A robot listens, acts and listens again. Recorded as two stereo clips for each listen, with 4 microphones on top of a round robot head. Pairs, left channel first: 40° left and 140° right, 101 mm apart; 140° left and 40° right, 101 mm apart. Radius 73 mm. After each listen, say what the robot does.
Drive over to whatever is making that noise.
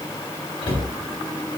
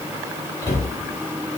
Turn 75° left.
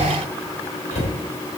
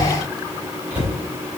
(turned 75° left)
Turn 30° left.
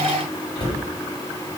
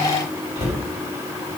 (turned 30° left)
Drive 1.0 m forward.
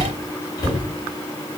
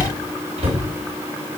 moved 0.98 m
Turn 10° right.
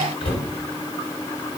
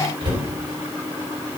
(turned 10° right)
Drive 1.0 m forward.
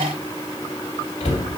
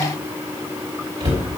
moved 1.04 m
Turn 15° left.
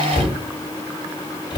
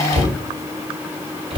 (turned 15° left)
Drive 1.0 m forward.
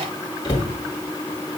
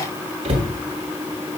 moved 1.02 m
Turn 15° right.
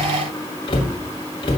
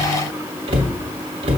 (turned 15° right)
Drive 1.0 m forward.
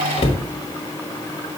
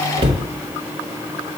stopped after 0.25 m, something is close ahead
Arrived at the cupboard door, straight ahead.